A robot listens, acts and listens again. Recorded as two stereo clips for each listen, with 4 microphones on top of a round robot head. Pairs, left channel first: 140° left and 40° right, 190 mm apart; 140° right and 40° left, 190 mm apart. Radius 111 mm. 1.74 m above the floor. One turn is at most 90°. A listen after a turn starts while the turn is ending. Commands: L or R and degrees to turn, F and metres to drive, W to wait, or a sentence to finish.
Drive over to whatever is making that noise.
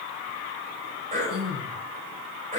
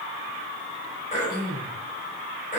R90
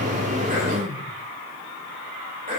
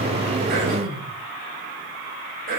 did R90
L10
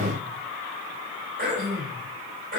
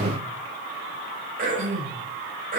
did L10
F1.0
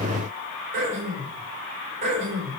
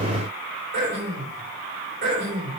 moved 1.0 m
F1.0
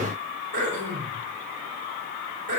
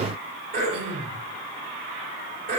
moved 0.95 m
F1.0
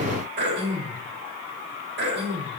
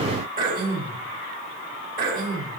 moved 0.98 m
F1.0
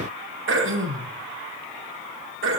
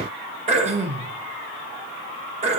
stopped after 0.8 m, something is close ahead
R20
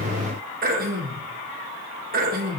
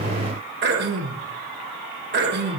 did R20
I am next to the throat clearing.